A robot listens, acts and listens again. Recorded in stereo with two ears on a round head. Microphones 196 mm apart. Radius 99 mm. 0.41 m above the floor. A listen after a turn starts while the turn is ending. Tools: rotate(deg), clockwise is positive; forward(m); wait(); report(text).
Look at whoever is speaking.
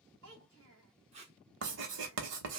rotate(70)
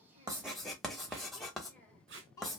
rotate(-15)
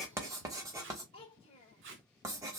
rotate(-35)
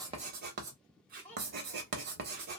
report("Found it: a child speaking, straight ahead, 1 to 2 m away.")